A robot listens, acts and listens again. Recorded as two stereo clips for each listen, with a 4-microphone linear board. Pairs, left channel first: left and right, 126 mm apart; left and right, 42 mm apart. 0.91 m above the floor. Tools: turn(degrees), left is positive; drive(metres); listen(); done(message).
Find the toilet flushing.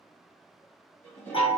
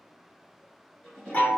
turn(degrees=15)
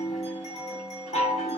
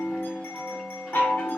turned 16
listen()
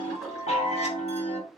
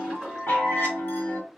listen()
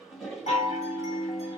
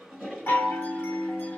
done("Facing the toilet flushing, 1 to 2 m away.")